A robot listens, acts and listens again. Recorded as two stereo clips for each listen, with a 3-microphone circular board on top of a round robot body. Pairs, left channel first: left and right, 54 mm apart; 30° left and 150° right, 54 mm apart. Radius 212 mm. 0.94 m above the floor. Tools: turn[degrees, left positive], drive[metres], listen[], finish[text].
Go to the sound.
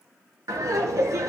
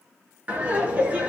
Thought: The laughter: 90° right.
Action: turn[-90]
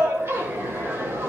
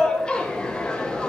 Thought: The laughter is now 45° right.
Action: turn[-45]
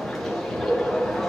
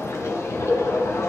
Action: drive[1.0]
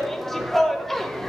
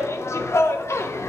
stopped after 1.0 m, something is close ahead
Action: finish[I am next to the laughter.]